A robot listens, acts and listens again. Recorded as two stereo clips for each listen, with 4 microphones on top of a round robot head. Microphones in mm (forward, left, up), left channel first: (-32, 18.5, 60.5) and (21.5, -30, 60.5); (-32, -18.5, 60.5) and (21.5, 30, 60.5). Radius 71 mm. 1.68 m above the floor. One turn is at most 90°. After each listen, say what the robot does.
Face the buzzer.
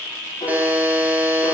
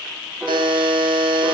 Turn 30° left.
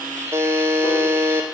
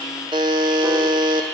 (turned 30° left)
Turn 15° left.
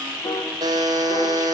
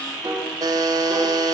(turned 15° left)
Facing the buzzer.